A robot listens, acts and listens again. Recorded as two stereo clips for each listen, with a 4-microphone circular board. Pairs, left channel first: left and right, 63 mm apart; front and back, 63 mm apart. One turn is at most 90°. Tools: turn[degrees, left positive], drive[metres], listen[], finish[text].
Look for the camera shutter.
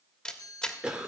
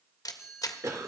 Thought: The camera shutter: 15° left.
Action: turn[15]
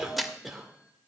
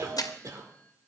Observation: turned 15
Action: finish[Found it: a camera shutter, straight ahead, 1 to 2 m away.]